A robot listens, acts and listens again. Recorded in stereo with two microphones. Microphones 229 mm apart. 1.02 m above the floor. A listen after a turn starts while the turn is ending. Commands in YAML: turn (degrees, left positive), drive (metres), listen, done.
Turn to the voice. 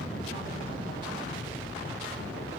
listen: true
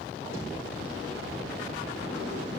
listen: true
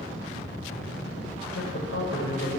turn: 65
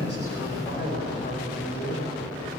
turn: 45
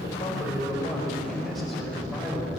done: "Found it: a man speaking, straight ahead."